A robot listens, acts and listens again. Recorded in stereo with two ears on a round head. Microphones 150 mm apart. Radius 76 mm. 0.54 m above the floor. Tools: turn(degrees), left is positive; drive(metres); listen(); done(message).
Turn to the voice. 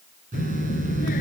turn(degrees=50)
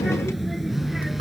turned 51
done("Found it: a child speaking, straight ahead.")